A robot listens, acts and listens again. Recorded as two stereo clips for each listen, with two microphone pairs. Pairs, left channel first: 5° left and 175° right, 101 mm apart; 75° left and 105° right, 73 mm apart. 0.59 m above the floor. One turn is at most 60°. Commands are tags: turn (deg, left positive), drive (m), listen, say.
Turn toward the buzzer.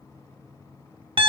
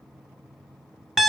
<listen/>
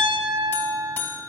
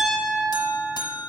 <turn deg="60"/>
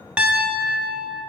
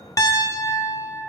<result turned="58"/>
<turn deg="20"/>
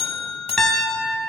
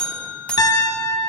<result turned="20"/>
<say>Facing the buzzer.</say>